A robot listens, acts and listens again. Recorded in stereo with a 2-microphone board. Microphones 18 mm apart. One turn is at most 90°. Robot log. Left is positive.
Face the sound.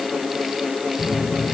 cmd yaw +90
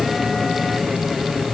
end: Facing the phone buzzing.